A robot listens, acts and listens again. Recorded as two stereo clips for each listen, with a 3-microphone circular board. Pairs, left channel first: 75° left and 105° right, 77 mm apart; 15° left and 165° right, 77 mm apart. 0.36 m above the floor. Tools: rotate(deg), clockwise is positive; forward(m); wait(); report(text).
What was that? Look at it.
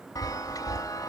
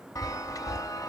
rotate(-45)
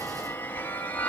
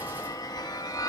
rotate(-15)
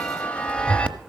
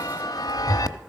report("Facing the chime, under 1 m away.")